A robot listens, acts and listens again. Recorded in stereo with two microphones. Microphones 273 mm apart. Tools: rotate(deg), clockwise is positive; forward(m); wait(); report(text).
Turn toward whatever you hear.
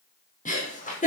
rotate(-30)
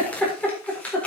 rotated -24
report("Facing the giggle.")